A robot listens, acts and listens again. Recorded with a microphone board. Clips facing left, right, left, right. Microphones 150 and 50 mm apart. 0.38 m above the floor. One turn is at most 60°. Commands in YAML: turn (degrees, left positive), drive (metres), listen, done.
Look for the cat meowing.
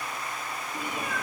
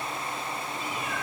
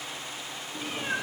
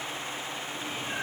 turn: 55
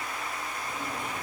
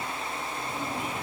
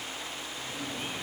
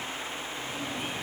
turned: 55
listen: true
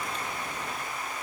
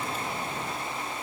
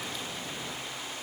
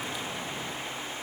listen: true
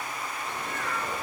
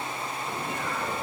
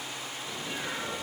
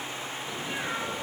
turn: -15
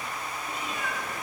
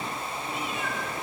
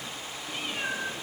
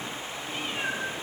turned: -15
done: "Found it: a cat meowing, straight ahead, over 4 m away."